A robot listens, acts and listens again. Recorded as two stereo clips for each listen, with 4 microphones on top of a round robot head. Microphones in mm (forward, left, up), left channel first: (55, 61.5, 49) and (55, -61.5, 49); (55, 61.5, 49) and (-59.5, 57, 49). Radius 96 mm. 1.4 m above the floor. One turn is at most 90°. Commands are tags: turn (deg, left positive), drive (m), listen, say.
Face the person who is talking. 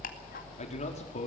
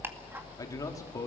<turn deg="65"/>
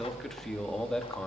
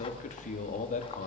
<say>Found it: a man speaking, straight ahead, 2 to 4 m away.</say>